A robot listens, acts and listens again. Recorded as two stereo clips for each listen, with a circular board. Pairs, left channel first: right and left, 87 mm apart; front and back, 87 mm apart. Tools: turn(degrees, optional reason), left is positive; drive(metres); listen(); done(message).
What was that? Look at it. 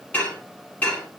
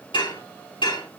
turn(degrees=-15, reason="The dishes clattering: 15° right.")
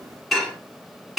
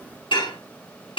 done("Facing the dishes clattering.")